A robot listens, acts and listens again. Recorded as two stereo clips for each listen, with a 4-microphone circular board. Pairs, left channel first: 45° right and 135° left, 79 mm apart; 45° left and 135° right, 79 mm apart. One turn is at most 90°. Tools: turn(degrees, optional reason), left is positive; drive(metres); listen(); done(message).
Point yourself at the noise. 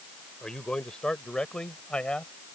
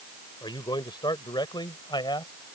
turn(degrees=35, reason="The man speaking: 35° left.")
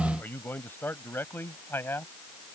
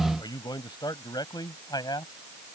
turn(degrees=15, reason="The man speaking is now 15° left.")
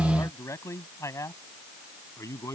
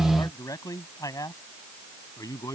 done("Facing the man speaking.")